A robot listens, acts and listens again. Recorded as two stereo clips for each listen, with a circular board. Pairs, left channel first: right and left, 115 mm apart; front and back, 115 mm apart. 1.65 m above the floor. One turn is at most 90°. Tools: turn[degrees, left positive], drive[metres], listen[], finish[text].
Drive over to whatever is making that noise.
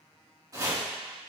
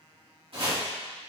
Thought: The chopping: 145° left.
Action: turn[90]
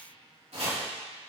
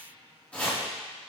Thought: The chopping is now 80° left.
Action: turn[80]
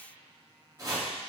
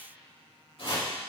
Thought: The chopping is now 35° left.
Action: turn[35]
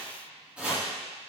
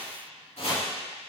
Thought: The chopping is now 10° left.
Action: turn[10]
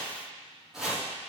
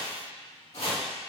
Action: drive[1.0]
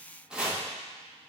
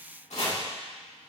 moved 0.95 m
Thought: The chopping is now 10° left.
Action: turn[10]
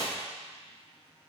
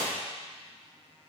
Action: listen[]
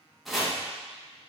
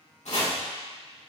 Action: drive[1.0]
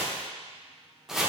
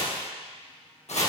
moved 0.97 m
Action: drive[1.0]
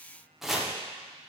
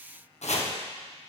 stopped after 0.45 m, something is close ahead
Action: finish[I am next to the chopping.]